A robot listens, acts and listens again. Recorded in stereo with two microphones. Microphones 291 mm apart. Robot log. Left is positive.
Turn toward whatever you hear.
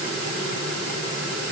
cmd idle
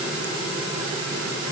cmd idle
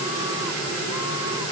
end: I can't make out anything.